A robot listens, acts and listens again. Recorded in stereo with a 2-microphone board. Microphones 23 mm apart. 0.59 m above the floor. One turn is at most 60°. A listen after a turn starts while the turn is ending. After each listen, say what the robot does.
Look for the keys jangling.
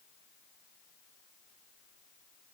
Keep listening.
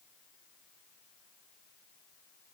Keep listening.
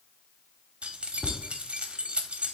Turn 55° right.
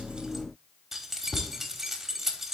Turn 15° right.
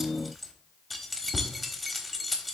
Facing the keys jangling.